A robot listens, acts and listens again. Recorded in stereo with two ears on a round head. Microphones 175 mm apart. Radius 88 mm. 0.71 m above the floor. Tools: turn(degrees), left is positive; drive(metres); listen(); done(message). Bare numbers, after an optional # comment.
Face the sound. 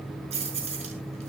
# The keys jangling: about 35° right or 145° right.
turn(-35)
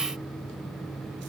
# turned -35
listen()
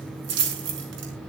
# So it is at 115° right.
turn(-115)
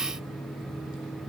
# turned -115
listen()
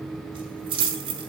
# The keys jangling is now 25° right.
turn(-25)
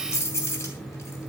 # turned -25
# The keys jangling is now 15° left.
turn(15)
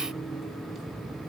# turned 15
listen()
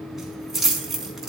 done("Facing the keys jangling.")